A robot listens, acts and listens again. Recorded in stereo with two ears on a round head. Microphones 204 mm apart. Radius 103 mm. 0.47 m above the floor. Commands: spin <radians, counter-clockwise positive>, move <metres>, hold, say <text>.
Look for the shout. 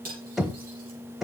hold
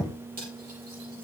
hold
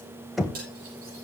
say I can't make out a shout to turn to.